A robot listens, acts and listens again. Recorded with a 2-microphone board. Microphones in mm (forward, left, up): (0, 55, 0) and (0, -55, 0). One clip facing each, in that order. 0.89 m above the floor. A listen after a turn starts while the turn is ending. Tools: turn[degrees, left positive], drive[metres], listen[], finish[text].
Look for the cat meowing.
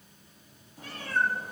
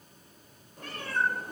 Thought: The cat meowing: about 65° right or 115° right.
Action: turn[-65]
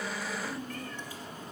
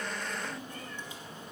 Thought: So it is at 25° right.
Action: turn[-25]
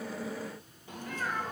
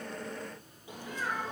Thought: The cat meowing is now 15° right.
Action: turn[-15]
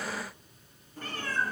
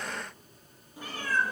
Thought: The cat meowing is now 15° right.
Action: turn[-15]
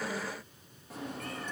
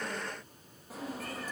Action: finish[Found it: a cat meowing, straight ahead, 2 to 4 m away.]